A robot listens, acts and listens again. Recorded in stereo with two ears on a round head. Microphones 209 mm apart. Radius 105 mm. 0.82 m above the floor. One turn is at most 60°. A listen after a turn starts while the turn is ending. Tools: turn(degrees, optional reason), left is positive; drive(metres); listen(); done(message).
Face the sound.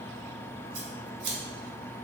turn(degrees=-60)
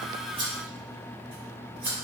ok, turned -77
turn(degrees=-10, reason="So it is at 10° right.")
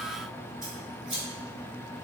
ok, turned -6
done("Facing the scissors.")